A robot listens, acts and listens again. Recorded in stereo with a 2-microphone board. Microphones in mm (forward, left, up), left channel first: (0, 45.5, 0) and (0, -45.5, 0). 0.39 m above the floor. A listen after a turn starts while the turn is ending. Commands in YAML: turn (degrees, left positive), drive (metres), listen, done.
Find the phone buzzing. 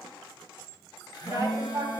turn: 50
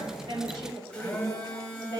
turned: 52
turn: 10
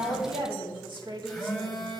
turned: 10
done: "Facing the phone buzzing, 2 to 4 m away."